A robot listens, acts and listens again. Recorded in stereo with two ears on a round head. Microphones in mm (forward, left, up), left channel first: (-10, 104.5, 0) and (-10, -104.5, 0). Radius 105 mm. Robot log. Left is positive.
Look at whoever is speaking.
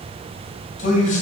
note: The man speaking: about 35° left or 145° left.
cmd yaw +35
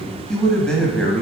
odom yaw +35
end: Found it: a man speaking, straight ahead.